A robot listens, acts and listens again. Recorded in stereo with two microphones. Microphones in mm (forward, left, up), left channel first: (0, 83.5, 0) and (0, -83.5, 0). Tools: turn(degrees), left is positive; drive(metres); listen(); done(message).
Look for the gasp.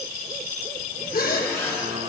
turn(degrees=65)
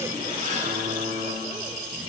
listen()
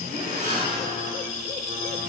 done("I heard a gasp, but can't make it out now. It was about straight ahead or 50° left.")